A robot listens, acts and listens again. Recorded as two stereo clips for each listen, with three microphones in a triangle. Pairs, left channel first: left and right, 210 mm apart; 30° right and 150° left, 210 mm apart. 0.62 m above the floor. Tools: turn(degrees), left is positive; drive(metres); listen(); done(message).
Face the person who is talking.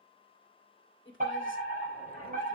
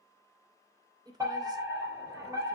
turn(degrees=80)
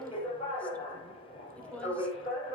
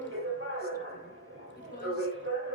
listen()
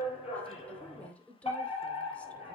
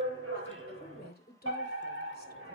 done("Facing the woman speaking, 2 to 4 m away.")